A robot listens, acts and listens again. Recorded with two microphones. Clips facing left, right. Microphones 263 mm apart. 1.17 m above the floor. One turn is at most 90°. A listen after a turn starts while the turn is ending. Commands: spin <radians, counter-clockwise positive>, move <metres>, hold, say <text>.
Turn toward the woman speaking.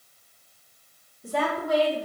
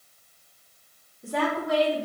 spin -1.22
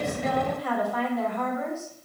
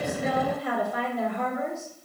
spin -0.44
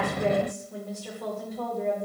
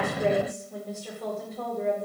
say Found it: a woman speaking, straight ahead.